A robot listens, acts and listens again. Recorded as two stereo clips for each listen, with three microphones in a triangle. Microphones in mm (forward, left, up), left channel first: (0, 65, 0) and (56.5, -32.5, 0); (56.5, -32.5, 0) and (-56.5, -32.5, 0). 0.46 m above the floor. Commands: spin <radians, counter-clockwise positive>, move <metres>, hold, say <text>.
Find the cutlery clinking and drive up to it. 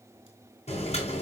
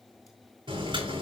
hold
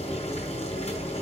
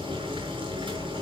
hold
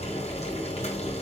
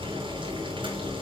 say I can't make out cutlery clinking, only boiling.